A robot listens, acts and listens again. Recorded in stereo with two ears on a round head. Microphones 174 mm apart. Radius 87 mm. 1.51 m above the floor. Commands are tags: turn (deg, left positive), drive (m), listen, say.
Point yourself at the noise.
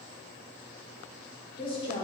<turn deg="25"/>
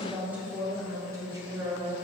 <turn deg="-25"/>
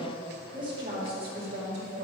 <turn deg="-35"/>
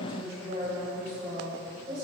<turn deg="-20"/>
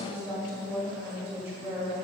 <say>Found it: a woman speaking, straight ahead.</say>